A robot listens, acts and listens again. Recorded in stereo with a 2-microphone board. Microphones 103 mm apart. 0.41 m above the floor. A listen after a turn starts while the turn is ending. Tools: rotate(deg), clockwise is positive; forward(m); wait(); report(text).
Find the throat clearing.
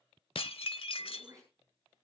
rotate(30)
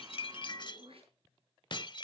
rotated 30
rotate(115)
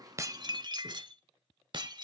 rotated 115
wait()
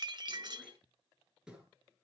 rotate(10)
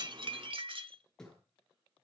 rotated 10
report("Found it: throat clearing, straight ahead, over 4 m away.")